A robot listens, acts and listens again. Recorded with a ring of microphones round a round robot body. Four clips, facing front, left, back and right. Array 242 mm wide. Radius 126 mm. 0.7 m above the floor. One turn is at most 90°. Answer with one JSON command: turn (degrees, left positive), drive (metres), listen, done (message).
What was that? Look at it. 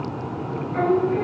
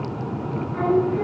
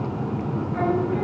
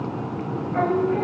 {"turn": -70}
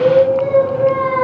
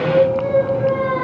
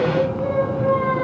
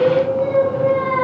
{"turn": 20}
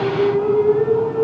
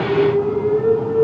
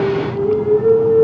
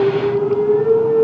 {"done": "Facing the singing."}